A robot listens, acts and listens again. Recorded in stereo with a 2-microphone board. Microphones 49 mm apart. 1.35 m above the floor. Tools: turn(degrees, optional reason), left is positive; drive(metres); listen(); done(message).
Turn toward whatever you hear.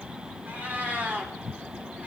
turn(degrees=-35, reason="The cat meowing: about 35° right or 145° right.")
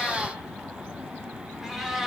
turn(degrees=-10, reason="So it is at 10° right.")
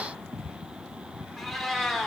done("Facing the cat meowing.")